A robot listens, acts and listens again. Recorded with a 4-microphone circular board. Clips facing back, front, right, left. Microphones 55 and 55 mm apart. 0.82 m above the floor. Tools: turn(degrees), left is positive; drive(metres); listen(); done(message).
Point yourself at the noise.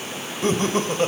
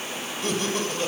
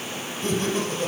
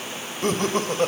turn(degrees=125)
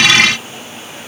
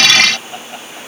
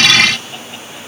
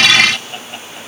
listen()
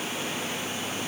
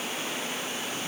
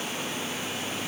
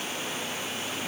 listen()
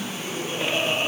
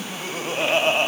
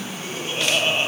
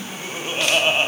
turn(degrees=25)
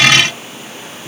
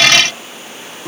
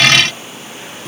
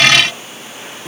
turn(degrees=10)
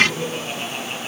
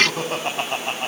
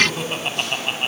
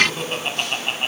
done("Found it: laughter, straight ahead.")